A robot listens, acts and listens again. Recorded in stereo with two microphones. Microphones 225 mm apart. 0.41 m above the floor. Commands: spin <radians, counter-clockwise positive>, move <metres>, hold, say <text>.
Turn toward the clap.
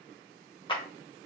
spin 0.35
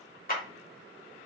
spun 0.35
spin 2.27
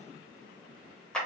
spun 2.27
say Found it: a clap, straight ahead, 1 to 2 m away.